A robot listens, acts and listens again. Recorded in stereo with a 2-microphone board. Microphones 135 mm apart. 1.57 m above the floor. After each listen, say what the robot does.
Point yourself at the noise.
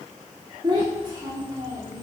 Turn 30° right.
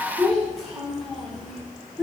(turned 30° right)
Facing the child speaking, over 4 m away.